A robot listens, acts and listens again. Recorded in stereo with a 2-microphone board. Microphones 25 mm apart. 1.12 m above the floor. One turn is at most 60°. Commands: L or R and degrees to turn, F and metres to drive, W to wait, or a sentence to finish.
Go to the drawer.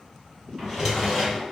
R30
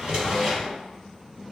R60
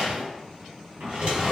R60
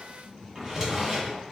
R25
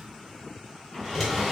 F1.0
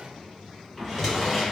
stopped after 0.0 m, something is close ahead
Blocked. The drawer is further on, straight ahead.